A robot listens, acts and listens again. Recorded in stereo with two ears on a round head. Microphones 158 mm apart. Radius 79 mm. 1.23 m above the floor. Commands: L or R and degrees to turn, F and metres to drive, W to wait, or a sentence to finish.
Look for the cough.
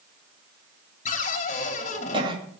R30
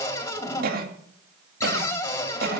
R125
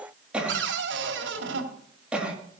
Facing the cough.